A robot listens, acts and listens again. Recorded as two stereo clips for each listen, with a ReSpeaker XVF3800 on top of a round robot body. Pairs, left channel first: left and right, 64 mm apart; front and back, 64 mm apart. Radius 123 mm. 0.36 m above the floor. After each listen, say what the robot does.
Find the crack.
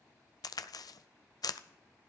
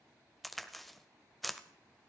Turn 90° left.
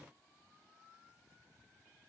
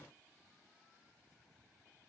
I heard a crack from this way, but can't make it out now.